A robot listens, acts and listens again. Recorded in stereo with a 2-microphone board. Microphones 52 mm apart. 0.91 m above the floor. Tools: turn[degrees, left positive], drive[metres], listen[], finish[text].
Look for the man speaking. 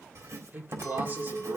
Thought: The man speaking: about 40° right or 140° right.
Action: turn[-40]
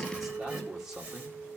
Thought: So it is at 10° right.
Action: turn[-10]
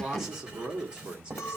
Thought: The man speaking is now 20° right.
Action: turn[-20]
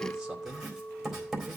Action: listen[]
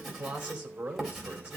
Thought: The man speaking is now 20° right.
Action: turn[-20]
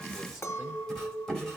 Action: listen[]
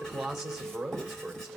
Action: finish[Found it: a man speaking, straight ahead, 2 to 4 m away.]